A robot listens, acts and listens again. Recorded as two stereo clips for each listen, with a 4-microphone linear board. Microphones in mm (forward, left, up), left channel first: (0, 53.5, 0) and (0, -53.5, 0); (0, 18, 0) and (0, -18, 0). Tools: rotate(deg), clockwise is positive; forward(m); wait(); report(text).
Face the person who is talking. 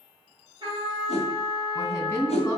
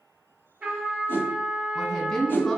rotate(-20)
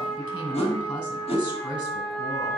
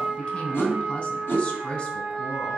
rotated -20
rotate(-135)
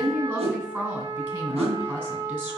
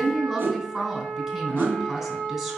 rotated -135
rotate(15)
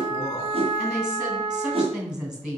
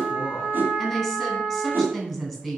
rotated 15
report("Facing the woman speaking, 2 to 4 m away.")